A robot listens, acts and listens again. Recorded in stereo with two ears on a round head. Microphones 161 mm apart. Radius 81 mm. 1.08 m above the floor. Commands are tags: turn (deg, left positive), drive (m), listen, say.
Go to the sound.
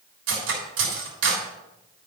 <turn deg="-90"/>
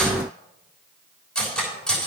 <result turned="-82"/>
<drive m="1.0"/>
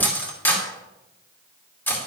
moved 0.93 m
<turn deg="10"/>
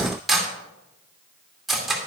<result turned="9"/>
<drive m="1.0"/>
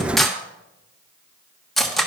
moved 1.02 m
<drive m="1.0"/>
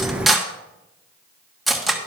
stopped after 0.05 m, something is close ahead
<say>Arrived at the cutlery clinking, straight ahead.</say>